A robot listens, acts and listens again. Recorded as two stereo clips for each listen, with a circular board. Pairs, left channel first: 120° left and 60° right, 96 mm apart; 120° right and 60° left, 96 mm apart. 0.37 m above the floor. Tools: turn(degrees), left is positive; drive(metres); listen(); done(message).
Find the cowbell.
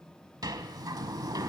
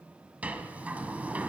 listen()
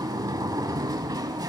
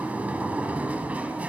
listen()
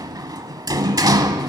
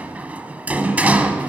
done("I can't make out a cowbell, only a sliding door.")